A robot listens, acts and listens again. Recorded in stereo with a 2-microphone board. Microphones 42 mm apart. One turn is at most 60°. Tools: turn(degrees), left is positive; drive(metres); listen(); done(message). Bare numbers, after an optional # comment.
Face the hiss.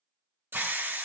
# The hiss: about 60° right or 120° right.
turn(-60)
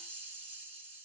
# So it is at 50° right.
turn(-50)
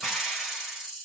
done("Facing the hiss.")